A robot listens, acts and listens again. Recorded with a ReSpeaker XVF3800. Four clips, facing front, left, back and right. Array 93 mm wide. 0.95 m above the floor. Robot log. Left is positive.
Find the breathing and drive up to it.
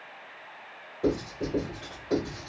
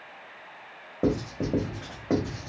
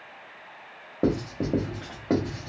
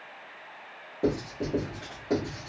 cmd idle
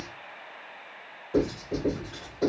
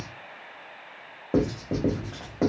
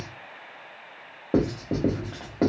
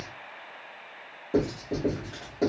cmd idle
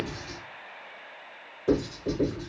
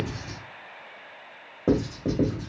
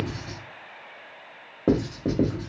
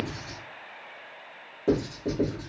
end: I can't make out breathing to turn to.